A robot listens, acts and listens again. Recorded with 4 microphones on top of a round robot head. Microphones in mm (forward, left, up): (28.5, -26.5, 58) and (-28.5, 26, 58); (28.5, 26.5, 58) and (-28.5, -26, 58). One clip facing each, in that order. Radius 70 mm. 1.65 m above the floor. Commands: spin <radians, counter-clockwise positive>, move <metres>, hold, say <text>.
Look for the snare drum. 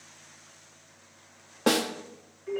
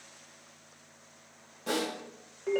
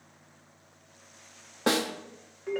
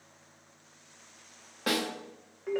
spin -0.35
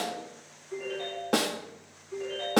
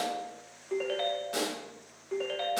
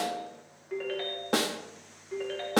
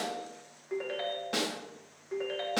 say Facing the snare drum, under 1 m away.